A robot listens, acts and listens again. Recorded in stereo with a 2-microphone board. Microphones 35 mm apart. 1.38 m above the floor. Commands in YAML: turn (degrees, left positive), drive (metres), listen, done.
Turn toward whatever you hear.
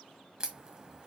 turn: -25
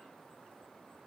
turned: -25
listen: true
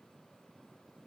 done: "I heard a crack, but can't make it out now. It was about straight ahead or 130° right."